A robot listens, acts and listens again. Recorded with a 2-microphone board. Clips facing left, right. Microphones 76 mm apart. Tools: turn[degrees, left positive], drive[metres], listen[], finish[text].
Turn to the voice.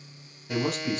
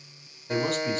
Action: turn[30]
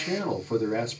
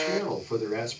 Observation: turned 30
Thought: So it is at 140° left.
Action: turn[140]
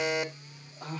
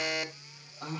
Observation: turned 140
Action: finish[Found it: a man speaking, straight ahead.]